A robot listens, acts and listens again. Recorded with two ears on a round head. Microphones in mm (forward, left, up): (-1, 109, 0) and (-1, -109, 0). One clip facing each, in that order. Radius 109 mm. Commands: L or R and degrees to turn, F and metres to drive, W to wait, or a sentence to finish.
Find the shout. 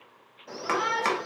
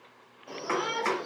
L30
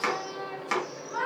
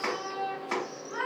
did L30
R25
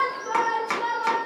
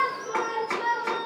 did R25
R10
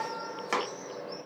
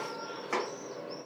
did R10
Facing the shout.